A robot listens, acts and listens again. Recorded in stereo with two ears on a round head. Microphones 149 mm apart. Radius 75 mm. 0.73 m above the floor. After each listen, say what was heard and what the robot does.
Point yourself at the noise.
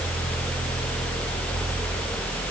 Keep listening.
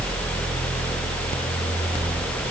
Keep listening.
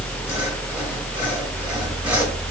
I can't make out anything to turn to.